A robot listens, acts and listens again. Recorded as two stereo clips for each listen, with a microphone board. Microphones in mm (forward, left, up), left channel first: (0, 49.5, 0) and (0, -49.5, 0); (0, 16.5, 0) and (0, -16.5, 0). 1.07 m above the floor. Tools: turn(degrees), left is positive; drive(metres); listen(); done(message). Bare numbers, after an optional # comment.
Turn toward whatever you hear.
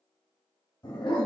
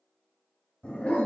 # The dog barking: about 50° left or 130° left.
turn(50)
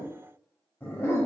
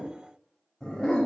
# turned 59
# So it is at 25° left.
turn(25)
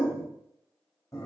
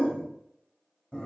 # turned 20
# The dog barking is now 40° left.
turn(40)
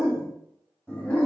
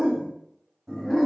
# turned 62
# The dog barking is now 15° left.
turn(15)
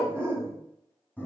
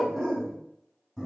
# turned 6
# The dog barking is now 15° left.
turn(15)
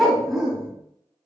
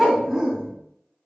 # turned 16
done("Facing the dog barking, 1 to 2 m away.")